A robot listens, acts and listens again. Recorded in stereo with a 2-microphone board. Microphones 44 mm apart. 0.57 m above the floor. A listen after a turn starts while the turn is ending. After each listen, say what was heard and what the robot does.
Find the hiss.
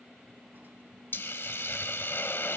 The hiss: about 65° left or 115° left. Turn 65° left.
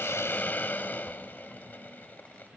So it is at 50° left. Turn 50° left.
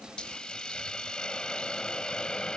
The hiss is now 20° left. Turn 20° left.
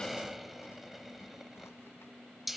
Found it: a hiss, straight ahead, under 1 m away.